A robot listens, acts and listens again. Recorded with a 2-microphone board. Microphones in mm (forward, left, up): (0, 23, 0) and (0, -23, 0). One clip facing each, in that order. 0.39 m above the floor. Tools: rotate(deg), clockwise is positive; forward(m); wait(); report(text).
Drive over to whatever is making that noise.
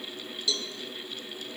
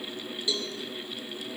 rotate(25)
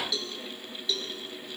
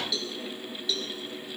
forward(1.0)
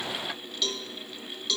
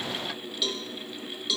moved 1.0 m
forward(1.0)
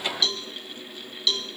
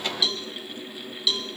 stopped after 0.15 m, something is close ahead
report("Arrived at the cowbell, straight ahead.")